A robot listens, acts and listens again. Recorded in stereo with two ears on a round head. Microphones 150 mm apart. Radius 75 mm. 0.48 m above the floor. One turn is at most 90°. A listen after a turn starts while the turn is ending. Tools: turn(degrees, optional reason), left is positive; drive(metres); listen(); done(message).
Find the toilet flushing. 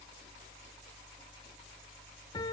listen()
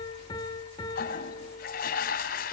turn(degrees=60, reason="The toilet flushing: about 60° left or 120° left.")
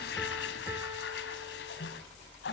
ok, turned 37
turn(degrees=80, reason="So it is at 80° left.")
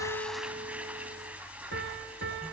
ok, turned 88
turn(degrees=-10, reason="The toilet flushing is now 10° right.")
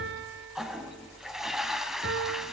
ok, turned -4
done("Found it: a toilet flushing, straight ahead, 2 to 4 m away.")